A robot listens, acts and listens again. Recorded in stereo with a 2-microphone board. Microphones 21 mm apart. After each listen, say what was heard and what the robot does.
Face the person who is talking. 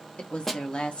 The woman speaking: about 55° left or 125° left. Turn 55° left.
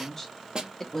So it is at 20° left. Turn 20° left.
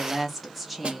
Facing the woman speaking, under 1 m away.